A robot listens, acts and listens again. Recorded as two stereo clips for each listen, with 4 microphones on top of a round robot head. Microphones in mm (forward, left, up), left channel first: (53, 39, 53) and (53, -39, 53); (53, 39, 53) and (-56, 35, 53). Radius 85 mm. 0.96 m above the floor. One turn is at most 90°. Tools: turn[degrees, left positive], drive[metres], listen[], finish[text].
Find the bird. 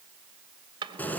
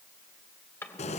Action: listen[]
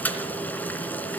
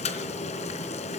Action: listen[]
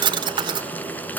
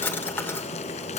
Action: finish[I can't make out a bird to turn to.]